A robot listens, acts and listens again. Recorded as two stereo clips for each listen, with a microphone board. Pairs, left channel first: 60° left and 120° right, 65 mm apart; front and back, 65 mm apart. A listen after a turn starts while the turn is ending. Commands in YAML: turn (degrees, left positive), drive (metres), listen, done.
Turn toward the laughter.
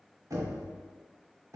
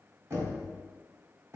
listen: true
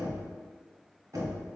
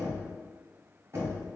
listen: true
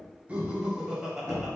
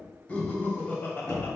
turn: -45
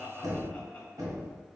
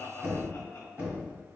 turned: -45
listen: true
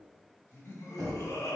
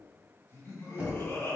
turn: 30
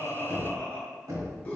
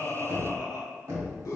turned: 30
done: "Facing the laughter, 1 to 2 m away."